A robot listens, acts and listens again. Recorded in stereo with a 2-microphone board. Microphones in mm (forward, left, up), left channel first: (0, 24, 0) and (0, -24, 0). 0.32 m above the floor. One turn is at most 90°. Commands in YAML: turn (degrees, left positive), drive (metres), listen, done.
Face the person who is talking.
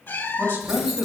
turn: -55
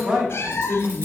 turn: -55
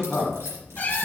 turn: -15
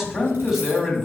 done: "Found it: a man speaking, straight ahead."